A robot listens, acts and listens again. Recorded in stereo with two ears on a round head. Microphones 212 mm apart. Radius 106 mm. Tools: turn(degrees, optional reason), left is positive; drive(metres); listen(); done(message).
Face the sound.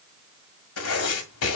turn(degrees=70, reason="The writing: about 70° left or 110° left.")
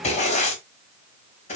turn(degrees=30, reason="So it is at 30° left.")
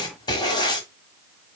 turn(degrees=20, reason="The writing is now 20° left.")
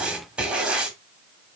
done("Facing the writing, 1 to 2 m away.")